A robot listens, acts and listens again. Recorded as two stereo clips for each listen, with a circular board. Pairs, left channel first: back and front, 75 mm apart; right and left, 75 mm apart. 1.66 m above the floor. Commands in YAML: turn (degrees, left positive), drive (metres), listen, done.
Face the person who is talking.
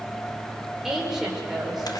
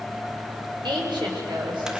turn: 85
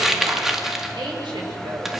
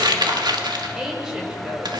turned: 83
turn: 10
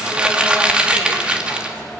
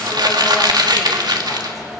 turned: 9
listen: true
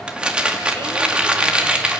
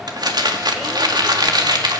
listen: true
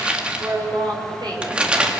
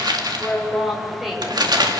done: "Found it: a woman speaking, straight ahead."